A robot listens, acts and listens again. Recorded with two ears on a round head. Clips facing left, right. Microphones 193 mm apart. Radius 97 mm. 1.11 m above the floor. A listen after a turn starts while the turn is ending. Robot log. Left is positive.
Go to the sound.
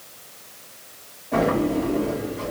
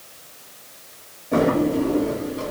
note: The drawer: about 50° right or 130° right.
cmd yaw -50
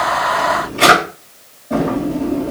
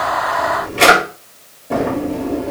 note: So it is at 80° right.
cmd yaw -80
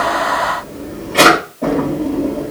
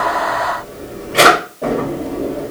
cmd fwd 1.0
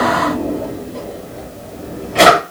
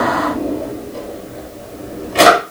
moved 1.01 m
note: The drawer is now 15° right.
cmd yaw -15
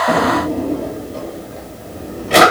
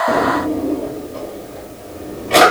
cmd fwd 1.0
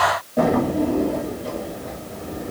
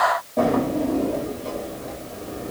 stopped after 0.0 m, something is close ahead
end: Arrived at the drawer, straight ahead.